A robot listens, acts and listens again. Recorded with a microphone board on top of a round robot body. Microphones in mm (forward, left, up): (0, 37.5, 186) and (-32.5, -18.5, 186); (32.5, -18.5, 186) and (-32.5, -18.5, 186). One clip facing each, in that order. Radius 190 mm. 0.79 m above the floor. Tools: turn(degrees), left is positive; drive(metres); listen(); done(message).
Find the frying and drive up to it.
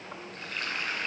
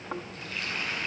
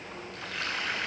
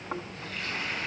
drive(metres=1.0)
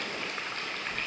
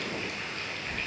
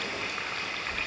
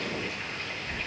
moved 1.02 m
turn(degrees=10)
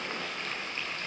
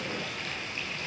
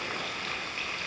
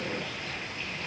drive(metres=1.0)
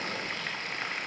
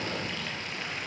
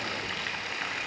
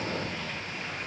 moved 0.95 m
drive(metres=1.0)
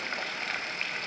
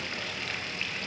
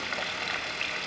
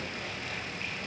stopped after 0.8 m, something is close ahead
done("Arrived at the frying, straight ahead.")